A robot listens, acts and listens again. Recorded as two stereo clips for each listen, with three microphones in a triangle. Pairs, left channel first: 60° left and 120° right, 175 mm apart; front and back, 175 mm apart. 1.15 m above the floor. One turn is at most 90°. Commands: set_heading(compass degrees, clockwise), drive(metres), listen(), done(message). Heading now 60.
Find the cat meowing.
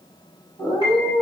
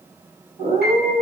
set_heading(330)
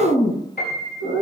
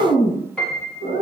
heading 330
set_heading(280)
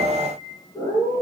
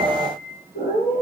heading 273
done("Facing the cat meowing, over 4 m away.")